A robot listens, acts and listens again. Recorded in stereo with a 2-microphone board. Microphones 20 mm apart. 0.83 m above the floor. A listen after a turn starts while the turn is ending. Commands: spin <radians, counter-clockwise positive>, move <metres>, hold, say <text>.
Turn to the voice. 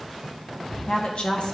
spin 0.96
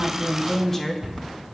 spin 0.26
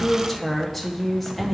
say Found it: a woman speaking, straight ahead, 1 to 2 m away.